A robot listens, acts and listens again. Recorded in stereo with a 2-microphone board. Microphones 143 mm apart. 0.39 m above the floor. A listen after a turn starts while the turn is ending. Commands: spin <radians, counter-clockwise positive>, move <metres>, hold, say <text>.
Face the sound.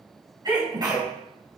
spin -0.52
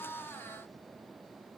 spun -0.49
hold
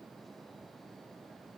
say I heard a sneeze, but can't make it out now. It was about straight ahead or 120° right.